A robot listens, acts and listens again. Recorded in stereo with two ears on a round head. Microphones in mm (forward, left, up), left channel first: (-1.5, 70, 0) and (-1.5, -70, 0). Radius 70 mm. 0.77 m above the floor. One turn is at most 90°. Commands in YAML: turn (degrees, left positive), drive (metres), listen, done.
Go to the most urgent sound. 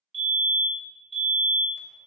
turn: -35
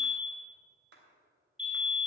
drive: 1.0
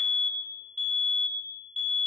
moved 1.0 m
drive: 1.0
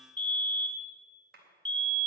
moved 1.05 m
drive: 1.0
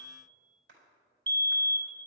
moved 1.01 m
turn: 15
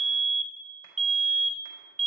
drive: 1.0
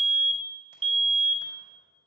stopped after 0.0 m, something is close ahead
turn: -10
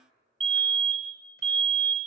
done: "I am next to the fire alarm."